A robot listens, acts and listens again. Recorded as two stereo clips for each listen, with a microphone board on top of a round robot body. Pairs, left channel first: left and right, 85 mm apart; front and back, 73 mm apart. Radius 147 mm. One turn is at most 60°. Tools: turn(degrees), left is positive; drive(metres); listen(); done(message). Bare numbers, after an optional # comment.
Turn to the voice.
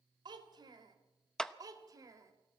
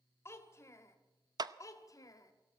# The child speaking: 40° right.
turn(-40)
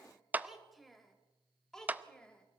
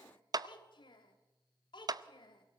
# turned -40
# The child speaking is now 10° left.
turn(10)
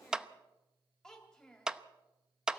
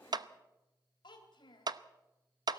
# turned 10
# The child speaking is now 10° left.
turn(10)
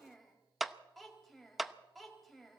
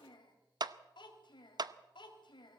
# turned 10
done("Facing the child speaking, 2 to 4 m away.")